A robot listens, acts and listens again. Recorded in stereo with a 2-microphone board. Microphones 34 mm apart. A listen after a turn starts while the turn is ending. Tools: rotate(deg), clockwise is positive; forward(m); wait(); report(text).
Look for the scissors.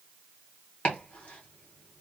wait()
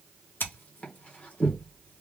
rotate(-90)
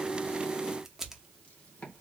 rotate(10)
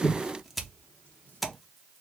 report("Found it: scissors, straight ahead.")